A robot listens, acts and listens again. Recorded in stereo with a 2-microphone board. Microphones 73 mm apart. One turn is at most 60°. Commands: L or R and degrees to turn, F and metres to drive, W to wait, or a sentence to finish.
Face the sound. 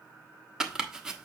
R30
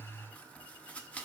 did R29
L20
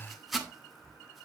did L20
Found it: chopping, straight ahead.